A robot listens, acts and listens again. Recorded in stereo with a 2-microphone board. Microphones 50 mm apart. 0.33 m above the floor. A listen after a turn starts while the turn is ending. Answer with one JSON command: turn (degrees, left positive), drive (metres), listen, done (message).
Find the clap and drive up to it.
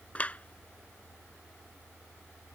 {"turn": 30}
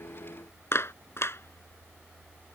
{"turn": 120}
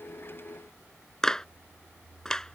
{"turn": 10}
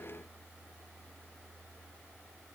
{"listen": true}
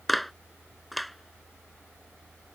{"drive": 1.0}
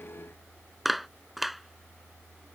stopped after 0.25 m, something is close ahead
{"done": "Something is in my way. I am facing the clap but have not reached it."}